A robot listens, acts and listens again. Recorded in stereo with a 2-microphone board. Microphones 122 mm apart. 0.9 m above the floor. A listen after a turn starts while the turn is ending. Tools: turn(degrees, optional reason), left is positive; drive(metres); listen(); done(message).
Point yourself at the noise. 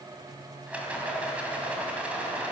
turn(degrees=-30)
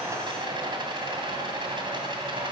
turn(degrees=-140, reason="So it is at 140° right.")
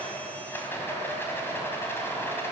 turn(degrees=15, reason="The rattle is now 15° left.")
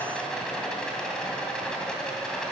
done("Found it: a rattle, straight ahead.")